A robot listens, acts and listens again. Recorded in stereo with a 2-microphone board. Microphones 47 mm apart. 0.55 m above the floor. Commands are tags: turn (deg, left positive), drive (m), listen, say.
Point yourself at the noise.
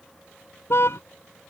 <turn deg="60"/>
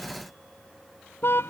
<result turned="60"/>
<turn deg="60"/>
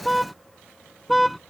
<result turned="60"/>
<say>Facing the car horn.</say>